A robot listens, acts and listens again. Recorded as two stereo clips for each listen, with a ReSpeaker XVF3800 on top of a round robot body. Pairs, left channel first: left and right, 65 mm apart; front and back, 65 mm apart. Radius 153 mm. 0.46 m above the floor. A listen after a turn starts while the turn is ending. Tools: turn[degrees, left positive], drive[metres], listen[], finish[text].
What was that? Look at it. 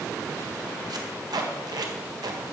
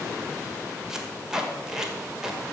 Thought: The tape being pulled: 100° right.
Action: turn[-100]
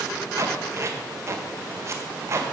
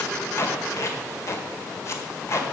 Thought: The tape being pulled is now 45° right.
Action: turn[-45]
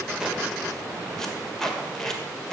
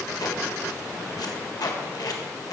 Action: finish[Facing the tape being pulled.]